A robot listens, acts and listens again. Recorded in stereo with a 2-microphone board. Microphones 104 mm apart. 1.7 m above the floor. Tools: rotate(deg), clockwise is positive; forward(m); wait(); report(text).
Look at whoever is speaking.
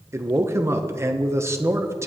rotate(25)
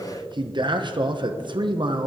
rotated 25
rotate(125)
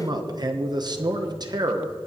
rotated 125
rotate(45)
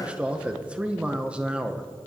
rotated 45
rotate(10)
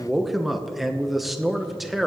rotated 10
report("Facing the man speaking, 1 to 2 m away.")